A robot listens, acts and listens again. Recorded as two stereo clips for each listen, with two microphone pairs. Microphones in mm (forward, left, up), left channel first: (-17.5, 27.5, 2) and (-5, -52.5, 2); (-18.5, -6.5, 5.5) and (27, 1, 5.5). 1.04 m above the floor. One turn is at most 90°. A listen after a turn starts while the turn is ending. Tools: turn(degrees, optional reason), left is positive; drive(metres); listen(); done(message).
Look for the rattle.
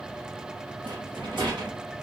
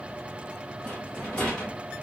turn(degrees=-90, reason="The rattle: 100° right.")
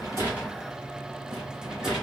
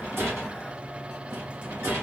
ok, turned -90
done("Found it: a rattle, straight ahead.")